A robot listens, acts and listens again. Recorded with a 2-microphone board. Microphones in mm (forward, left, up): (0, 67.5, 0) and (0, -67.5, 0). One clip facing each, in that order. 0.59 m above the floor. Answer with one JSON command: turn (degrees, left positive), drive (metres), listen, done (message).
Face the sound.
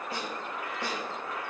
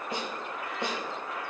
{"turn": -25}
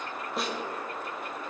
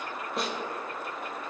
{"done": "Found it: a snare drum, straight ahead."}